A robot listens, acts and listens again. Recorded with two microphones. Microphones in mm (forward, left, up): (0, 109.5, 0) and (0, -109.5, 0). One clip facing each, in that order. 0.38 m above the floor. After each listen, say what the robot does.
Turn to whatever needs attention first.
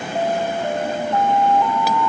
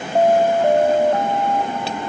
Turn 55° right.
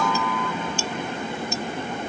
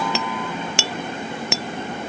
Keep listening.
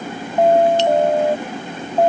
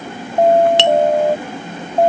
Turn 20° right.
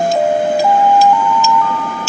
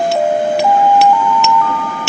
Facing the alarm.